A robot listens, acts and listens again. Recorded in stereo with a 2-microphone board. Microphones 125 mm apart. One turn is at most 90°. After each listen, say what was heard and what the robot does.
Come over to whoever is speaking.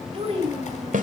The child speaking: about 45° right or 135° right. Turn 45° right.
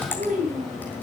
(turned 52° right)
So it is at 80° right. Turn 80° right.
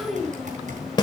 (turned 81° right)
Drive 1.0 m forward.
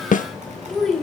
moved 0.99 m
Drive 1.0 m forward.
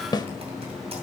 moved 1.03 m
Keep listening.
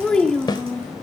Drive 1.0 m forward.
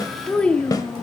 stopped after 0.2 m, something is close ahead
The child speaking is now 10° left. Turn 10° left.
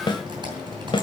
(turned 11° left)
Keep listening.
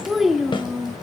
I am next to the child speaking.